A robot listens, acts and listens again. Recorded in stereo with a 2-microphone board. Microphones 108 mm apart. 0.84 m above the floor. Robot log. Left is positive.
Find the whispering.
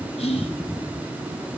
note: The whispering: about 65° left or 115° left.
cmd yaw +65
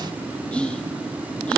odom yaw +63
note: So it is at 10° left.
cmd yaw +10
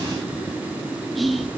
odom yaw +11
end: Facing the whispering.